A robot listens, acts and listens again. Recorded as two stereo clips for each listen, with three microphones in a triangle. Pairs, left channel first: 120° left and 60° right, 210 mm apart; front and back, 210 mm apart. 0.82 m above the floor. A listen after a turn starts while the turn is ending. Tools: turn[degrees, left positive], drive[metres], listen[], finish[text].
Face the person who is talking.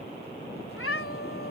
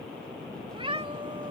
Action: listen[]
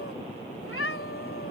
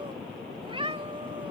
Action: listen[]
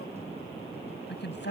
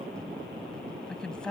Thought: The woman speaking: 85° left.
Action: turn[85]
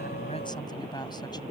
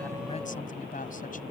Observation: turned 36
Thought: The woman speaking is now 50° left.
Action: turn[50]
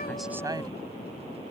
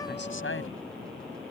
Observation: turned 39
Thought: Nothing new. It was at 10° left.
Action: turn[10]
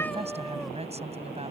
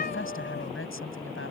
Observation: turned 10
Action: finish[Found it: a woman speaking, straight ahead.]